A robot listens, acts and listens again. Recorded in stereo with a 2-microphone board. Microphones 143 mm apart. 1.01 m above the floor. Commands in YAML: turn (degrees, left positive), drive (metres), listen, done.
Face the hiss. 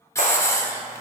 turn: 20
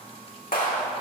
listen: true
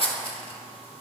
turn: 135
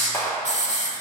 turn: 55
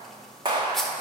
done: "Found it: a hiss, straight ahead."